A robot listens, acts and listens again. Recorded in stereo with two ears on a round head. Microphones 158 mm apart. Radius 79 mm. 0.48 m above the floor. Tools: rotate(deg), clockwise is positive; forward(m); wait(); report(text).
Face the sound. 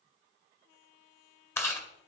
rotate(-30)
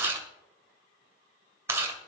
rotate(15)
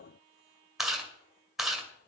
report("Facing the chewing.")